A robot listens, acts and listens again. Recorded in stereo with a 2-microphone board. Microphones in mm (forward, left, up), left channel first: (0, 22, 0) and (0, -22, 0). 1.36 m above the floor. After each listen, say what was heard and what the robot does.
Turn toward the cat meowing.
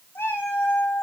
The cat meowing: about 65° left or 115° left. Turn 65° left.
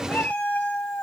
So it is at 45° left. Turn 45° left.
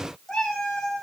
Facing the cat meowing, 2 to 4 m away.